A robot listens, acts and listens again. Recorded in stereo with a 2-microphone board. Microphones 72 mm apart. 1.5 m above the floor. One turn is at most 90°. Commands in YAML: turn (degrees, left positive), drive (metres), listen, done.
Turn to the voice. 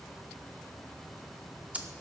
listen: true
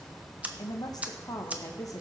turn: 55
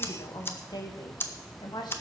turn: 90
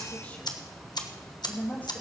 turn: 25
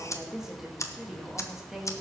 done: "Facing the woman speaking, 2 to 4 m away."